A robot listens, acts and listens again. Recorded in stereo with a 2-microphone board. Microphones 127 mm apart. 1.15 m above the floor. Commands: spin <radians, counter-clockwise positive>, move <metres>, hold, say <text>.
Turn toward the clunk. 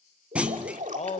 spin -0.52
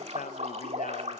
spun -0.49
hold
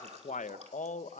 say I heard a clunk, but can't make it out now. It was about 20° left or 140° right.